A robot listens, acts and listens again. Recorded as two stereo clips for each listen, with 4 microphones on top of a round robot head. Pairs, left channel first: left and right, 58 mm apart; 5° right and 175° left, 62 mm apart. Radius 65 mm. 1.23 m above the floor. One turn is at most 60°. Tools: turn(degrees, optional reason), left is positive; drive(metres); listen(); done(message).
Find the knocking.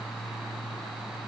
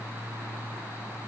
listen()
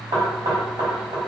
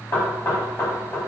turn(degrees=-60, reason="The knocking: 65° right.")
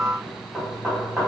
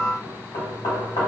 turn(degrees=-20, reason="The knocking is now 20° right.")
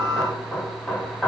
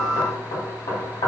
done("Found it: knocking, straight ahead.")